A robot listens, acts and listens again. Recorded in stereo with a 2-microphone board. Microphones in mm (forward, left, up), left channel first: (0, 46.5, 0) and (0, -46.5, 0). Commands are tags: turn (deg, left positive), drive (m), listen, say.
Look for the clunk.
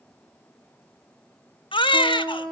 <listen/>
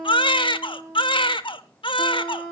<listen/>
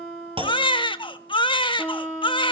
<turn deg="-70"/>
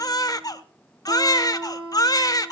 <listen/>
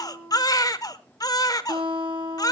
<say>I heard a clunk, but can't make it out now. It was about straight ahead or 40° right.</say>